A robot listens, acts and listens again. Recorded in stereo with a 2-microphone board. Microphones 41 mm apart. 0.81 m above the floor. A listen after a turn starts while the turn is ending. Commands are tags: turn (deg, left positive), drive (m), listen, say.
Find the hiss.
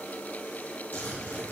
<listen/>
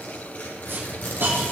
<turn deg="-60"/>
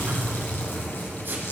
<listen/>
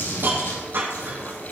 <turn deg="-60"/>
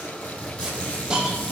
<turn deg="-20"/>
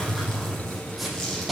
<say>Facing the hiss, over 4 m away.</say>